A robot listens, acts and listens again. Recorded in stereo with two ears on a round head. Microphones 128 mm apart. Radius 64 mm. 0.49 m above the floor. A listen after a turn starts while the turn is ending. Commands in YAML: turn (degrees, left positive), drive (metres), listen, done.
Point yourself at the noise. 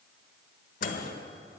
turn: 50
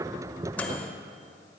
turn: 10
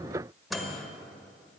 done: "Found it: a microwave, straight ahead."